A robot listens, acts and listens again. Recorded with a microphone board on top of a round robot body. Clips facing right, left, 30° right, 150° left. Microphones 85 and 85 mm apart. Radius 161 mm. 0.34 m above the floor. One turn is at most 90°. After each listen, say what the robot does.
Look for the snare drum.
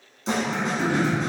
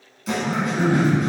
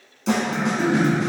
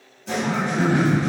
Turn 25° right.
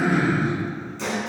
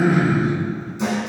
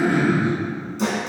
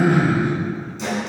Turn 15° left.
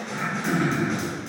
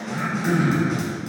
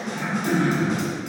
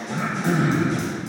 Facing the snare drum, 1 to 2 m away.